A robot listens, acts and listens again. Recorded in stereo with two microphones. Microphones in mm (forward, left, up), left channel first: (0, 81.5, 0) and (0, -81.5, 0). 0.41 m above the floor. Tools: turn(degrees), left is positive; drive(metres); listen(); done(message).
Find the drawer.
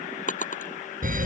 turn(degrees=50)
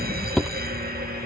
done("Found it: a drawer, straight ahead.")